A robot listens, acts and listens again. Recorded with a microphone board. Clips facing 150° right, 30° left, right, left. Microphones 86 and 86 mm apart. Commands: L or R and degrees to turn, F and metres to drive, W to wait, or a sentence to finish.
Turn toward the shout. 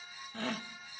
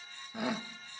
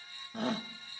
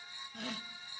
R45
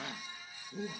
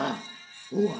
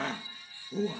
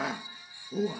L10
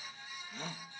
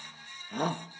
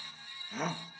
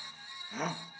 Facing the shout.